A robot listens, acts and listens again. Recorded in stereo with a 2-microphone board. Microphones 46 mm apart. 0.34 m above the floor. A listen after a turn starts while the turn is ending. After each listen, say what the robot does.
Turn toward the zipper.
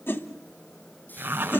Turn 55° right.
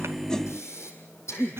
Keep listening.
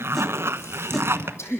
Turn 70° right.
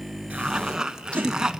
Turn 15° right.
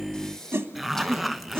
Found it: a zipper, straight ahead.